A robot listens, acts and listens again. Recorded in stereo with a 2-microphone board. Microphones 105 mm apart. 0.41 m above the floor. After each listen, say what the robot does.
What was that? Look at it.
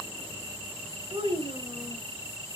Turn 60° right.
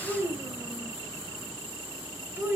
Turn 20° right.
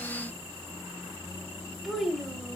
Found it: a child speaking, straight ahead, 1 to 2 m away.